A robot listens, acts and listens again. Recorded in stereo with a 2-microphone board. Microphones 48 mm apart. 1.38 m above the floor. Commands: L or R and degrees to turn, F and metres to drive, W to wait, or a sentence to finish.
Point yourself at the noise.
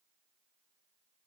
W
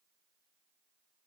W
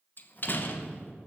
L45
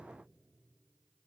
W
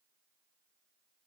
I heard a door slam, but can't make it out now. It was about straight ahead or 90° left.